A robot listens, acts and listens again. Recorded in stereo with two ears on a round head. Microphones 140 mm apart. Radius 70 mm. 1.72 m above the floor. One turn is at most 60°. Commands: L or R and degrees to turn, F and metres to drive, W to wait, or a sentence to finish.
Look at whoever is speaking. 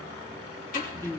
L20
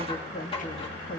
L60
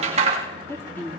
L10
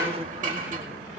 R10
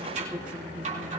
R10
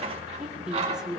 Facing the woman speaking.